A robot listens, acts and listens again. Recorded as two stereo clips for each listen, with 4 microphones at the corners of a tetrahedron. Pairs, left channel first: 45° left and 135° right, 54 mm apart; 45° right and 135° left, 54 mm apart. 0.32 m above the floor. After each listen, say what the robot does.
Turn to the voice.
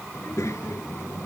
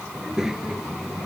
Turn 55° left.
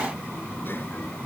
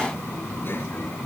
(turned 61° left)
Found it: a child speaking, straight ahead.